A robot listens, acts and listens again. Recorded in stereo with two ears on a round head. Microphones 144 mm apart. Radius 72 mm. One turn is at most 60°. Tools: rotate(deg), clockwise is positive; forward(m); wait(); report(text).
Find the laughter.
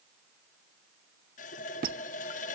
wait()
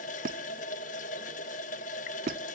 wait()
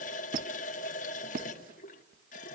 report("I can't make out laughter to turn to.")